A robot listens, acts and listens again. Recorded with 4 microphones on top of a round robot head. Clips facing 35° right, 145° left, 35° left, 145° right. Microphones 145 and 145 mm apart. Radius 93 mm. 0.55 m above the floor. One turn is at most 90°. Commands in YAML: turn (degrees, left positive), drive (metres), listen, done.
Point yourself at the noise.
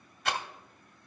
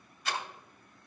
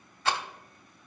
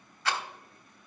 turn: -30
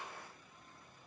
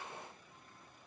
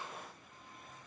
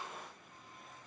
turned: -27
listen: true
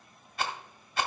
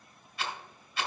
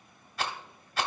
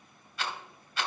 done: "Found it: a rattle, straight ahead."